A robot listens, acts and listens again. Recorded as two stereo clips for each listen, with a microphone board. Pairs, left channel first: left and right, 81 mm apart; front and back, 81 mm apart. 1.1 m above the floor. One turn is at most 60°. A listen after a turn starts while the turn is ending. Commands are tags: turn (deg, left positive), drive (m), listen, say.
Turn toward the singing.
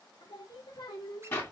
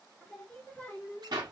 <turn deg="60"/>
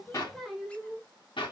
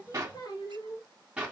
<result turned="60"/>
<turn deg="-10"/>
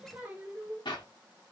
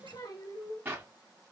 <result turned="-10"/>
<turn deg="-35"/>
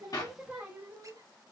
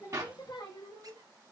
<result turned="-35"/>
<turn deg="-20"/>
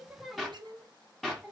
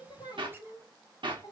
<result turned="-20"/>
<say>Facing the singing.</say>